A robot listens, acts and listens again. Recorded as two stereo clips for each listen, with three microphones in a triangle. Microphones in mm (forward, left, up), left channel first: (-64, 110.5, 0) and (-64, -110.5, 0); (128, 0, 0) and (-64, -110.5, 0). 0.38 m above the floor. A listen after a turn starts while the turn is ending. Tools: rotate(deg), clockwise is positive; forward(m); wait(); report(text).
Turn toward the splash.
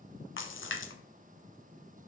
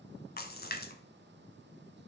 rotate(-70)
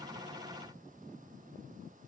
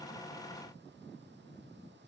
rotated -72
report("Facing where the splash came from. I can't hear it now.")